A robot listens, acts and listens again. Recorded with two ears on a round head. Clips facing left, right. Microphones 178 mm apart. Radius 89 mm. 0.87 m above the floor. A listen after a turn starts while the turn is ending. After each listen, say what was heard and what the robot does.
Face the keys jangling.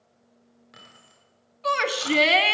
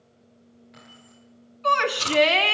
The keys jangling: about 60° left or 120° left. Turn 60° left.
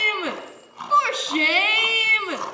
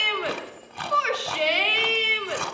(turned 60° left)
Keep listening.
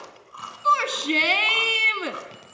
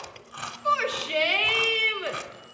So it is at 85° left. Turn 85° left.
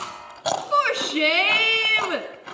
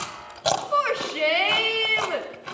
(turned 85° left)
Keep listening.
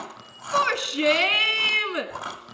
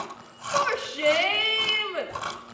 The keys jangling is now 35° left. Turn 35° left.
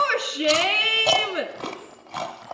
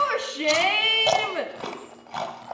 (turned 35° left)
Keep listening.
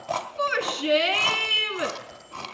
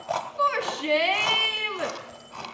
Keep listening.
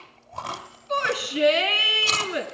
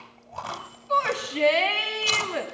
I heard keys jangling from this way, but can't make it out now.